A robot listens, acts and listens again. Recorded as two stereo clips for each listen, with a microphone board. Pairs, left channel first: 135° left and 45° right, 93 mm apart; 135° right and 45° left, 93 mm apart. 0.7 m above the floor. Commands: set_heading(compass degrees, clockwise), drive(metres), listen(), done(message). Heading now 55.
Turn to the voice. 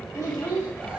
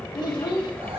set_heading(230)
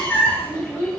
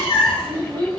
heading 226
done("Facing the child speaking, 2 to 4 m away.")